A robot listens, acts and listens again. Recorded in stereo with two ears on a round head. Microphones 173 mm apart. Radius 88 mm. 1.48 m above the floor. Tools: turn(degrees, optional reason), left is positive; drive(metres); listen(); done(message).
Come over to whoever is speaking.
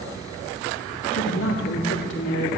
turn(degrees=60, reason="The woman speaking: about 60° left or 120° left.")
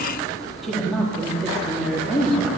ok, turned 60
drive(metres=1.0)
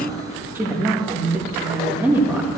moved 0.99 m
turn(degrees=-10, reason="The woman speaking is now 10° right.")
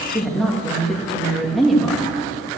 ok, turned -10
drive(metres=1.0)
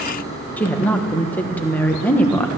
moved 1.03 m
turn(degrees=10, reason="The woman speaking is now 10° left.")
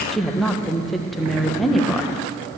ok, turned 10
drive(metres=1.0)
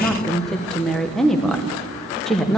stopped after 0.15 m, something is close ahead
done("I am next to the woman speaking.")